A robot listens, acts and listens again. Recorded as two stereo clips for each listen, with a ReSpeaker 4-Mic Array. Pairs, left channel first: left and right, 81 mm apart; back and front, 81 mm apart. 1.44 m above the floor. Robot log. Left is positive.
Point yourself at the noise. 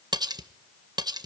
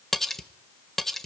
note: The cutlery clinking: 95° right.
cmd yaw -95
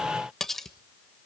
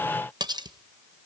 end: Found it: cutlery clinking, straight ahead.